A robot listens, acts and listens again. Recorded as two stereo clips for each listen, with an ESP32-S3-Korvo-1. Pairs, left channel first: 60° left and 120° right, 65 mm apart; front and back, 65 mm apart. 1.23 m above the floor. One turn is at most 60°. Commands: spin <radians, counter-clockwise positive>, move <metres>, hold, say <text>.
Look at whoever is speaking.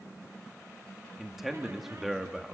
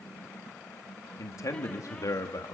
spin -0.61
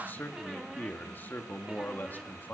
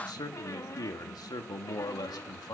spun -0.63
say Found it: a man speaking, straight ahead, 1 to 2 m away.